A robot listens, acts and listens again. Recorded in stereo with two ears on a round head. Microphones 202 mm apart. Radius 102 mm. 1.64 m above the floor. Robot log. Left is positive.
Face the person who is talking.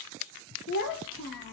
note: The child speaking: about 60° left or 120° left.
cmd yaw +60
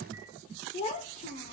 note: So it is at 40° left.
cmd yaw +40
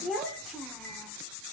end: Found it: a child speaking, straight ahead, 1 to 2 m away.